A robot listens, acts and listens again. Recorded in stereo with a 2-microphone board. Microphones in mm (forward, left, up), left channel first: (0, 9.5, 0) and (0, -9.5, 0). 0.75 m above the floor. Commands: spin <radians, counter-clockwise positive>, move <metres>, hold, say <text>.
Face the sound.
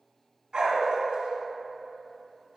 spin -1.13
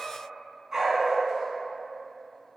spin -0.26
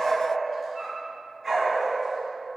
say Facing the dog barking, over 4 m away.